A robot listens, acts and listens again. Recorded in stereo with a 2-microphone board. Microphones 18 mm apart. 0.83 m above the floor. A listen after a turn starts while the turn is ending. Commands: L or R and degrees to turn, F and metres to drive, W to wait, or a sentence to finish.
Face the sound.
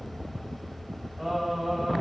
R20
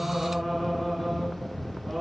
R30
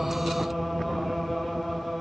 L15
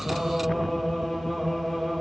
Found it: singing, straight ahead.